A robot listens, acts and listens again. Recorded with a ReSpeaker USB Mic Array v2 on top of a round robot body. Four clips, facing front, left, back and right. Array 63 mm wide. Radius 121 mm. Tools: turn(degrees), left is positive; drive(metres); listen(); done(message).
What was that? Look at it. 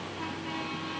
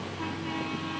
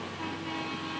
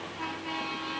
listen()
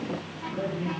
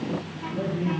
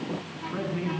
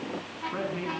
turn(degrees=-125)
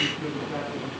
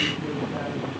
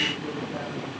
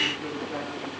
listen()
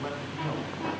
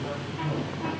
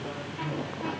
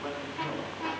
turn(degrees=-20)
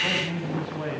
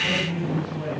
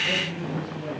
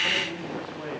done("Facing the man speaking, over 4 m away.")